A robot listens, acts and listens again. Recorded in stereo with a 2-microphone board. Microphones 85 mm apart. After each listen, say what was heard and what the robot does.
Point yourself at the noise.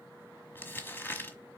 The crumpling: about 25° left or 155° left. Turn 25° left.
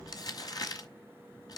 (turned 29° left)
So it is at 125° left. Turn 125° left.
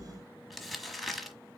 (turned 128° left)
Found it: crumpling, straight ahead.